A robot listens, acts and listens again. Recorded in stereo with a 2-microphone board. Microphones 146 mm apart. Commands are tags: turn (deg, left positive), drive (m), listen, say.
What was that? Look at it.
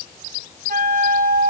<turn deg="-70"/>
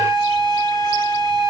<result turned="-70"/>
<turn deg="-30"/>
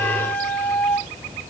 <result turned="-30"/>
<turn deg="10"/>
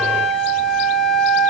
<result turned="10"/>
<say>Found it: a flute, straight ahead.</say>